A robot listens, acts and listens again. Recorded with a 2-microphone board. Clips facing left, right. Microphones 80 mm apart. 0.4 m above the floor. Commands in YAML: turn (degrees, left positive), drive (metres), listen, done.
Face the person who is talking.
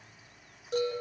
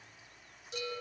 listen: true
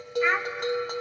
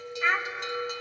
turn: 30
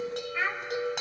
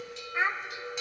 turn: -25
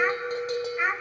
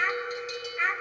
turn: 10
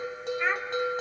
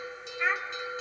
done: "Found it: a child speaking, straight ahead."